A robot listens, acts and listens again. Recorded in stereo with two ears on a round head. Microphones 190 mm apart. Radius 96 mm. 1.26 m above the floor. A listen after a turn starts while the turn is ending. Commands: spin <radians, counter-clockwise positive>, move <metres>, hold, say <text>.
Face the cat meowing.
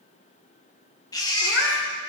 spin 1.05
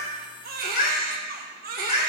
spin 0.52
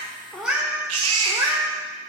spin -0.26
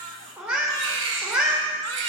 spin -0.17
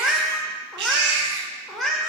say Found it: a cat meowing, straight ahead.